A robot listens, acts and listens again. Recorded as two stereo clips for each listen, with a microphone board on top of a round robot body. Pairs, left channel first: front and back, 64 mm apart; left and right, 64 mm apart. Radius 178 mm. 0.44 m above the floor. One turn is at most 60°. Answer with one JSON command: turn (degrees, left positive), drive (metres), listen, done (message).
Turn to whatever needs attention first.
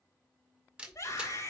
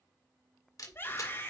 {"turn": 35}
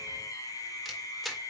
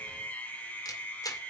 {"turn": 25}
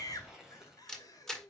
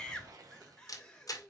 {"turn": 10}
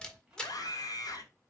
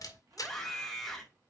{"done": "Facing the scream."}